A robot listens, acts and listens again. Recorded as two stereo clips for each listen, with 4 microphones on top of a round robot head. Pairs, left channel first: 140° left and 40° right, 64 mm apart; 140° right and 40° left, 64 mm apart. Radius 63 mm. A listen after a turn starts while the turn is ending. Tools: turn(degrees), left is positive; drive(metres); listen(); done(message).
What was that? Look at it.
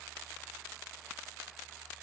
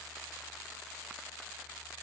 listen()
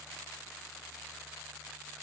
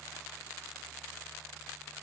listen()
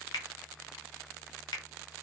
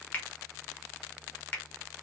turn(degrees=160)
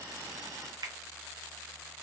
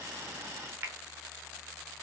turn(degrees=-15)
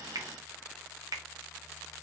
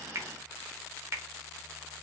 turn(degrees=-10)
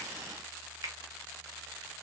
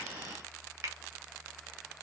done("Found it: a finger snap, straight ahead, under 1 m away.")